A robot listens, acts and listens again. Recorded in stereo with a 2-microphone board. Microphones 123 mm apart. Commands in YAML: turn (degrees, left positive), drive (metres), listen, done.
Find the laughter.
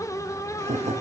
turn: -60
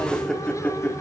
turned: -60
turn: 20
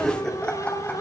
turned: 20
turn: 10
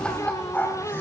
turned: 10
turn: 15
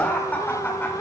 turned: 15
turn: 20
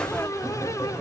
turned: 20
done: "Found it: laughter, straight ahead, 2 to 4 m away."